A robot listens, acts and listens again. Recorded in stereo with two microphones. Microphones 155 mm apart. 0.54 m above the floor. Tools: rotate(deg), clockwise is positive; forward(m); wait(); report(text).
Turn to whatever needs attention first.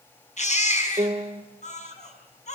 rotate(-50)
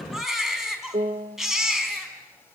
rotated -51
report("Facing the baby crying.")